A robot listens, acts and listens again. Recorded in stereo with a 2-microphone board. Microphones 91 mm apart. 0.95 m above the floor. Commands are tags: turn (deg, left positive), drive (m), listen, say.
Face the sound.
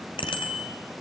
<turn deg="90"/>
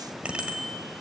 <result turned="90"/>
<turn deg="-15"/>
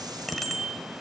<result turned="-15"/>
<say>Found it: a bicycle bell, straight ahead.</say>